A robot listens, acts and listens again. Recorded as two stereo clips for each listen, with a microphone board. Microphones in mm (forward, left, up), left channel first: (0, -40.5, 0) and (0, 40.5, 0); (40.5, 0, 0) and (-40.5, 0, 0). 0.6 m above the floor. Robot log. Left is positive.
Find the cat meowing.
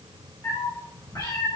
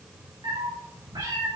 note: The cat meowing: 140° right.
cmd yaw -140
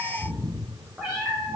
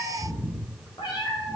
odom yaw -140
note: The cat meowing is now 10° left.
cmd yaw +10
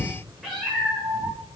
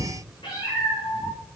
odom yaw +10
end: Facing the cat meowing, over 4 m away.